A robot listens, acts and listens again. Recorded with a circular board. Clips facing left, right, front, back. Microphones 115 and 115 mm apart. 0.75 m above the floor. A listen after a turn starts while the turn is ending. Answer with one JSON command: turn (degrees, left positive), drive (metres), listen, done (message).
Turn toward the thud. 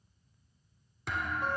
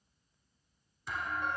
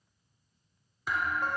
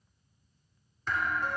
{"turn": 80}
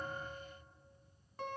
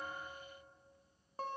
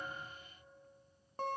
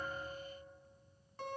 {"done": "Facing where the thud came from. I can't hear it now."}